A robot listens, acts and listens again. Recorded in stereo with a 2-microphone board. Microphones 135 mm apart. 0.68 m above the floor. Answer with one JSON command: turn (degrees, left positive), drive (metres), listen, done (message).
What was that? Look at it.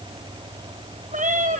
{"turn": -70}
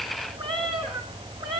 {"turn": -40}
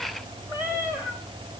{"turn": -10}
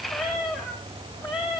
{"done": "Facing the cat meowing, over 4 m away."}